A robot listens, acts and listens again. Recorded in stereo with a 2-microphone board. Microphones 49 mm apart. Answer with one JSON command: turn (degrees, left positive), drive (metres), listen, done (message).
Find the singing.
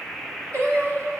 {"turn": -70}
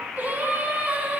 {"turn": -35}
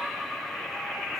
{"listen": true}
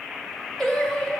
{"turn": 15}
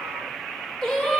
{"turn": 15}
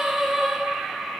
{"done": "Facing the singing."}